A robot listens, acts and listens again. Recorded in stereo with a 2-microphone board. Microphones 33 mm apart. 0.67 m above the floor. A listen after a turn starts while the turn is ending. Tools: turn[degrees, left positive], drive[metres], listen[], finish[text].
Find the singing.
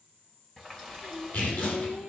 Thought: The singing: about 55° left or 125° left.
Action: turn[55]
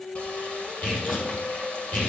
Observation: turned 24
Thought: So it is at 100° left.
Action: turn[100]
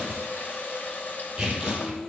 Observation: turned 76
Action: finish[Facing the singing, 2 to 4 m away.]